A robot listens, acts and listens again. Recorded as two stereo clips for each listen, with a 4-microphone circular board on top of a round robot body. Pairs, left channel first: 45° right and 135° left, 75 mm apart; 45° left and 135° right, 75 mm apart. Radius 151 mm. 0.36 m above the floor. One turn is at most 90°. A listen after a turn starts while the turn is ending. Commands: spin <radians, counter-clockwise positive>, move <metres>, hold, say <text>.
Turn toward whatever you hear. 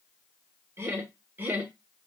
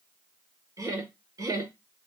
spin -1.57
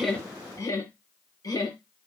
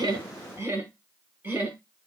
spin -1.22
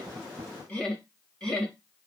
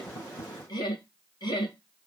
spin 0.61
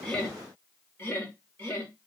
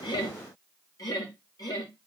spin 0.26
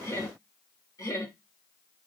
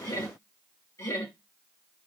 say Facing the laughter.